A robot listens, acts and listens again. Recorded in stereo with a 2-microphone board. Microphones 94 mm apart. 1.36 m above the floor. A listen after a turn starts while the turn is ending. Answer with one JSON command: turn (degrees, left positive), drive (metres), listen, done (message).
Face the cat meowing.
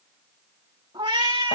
{"turn": -60}
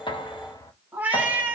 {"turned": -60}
{"turn": -20}
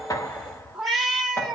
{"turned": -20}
{"done": "Facing the cat meowing, 2 to 4 m away."}